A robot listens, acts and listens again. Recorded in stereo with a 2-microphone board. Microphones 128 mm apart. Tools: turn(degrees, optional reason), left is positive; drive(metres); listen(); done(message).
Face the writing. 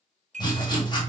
turn(degrees=35, reason="The writing: about 35° left or 145° left.")
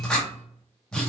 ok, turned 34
done("Facing the writing.")